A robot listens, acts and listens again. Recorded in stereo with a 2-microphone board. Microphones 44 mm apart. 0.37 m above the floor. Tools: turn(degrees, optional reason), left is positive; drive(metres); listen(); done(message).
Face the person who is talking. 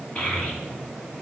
turn(degrees=30, reason="The child speaking: about 30° left or 150° left.")
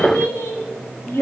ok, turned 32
turn(degrees=105, reason="So it is at 105° left.")
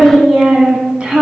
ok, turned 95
turn(degrees=-25, reason="The child speaking is now 25° right.")
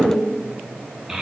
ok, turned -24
turn(degrees=-15, reason="The child speaking is now 15° right.")
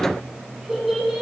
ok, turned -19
done("Facing the child speaking, 2 to 4 m away.")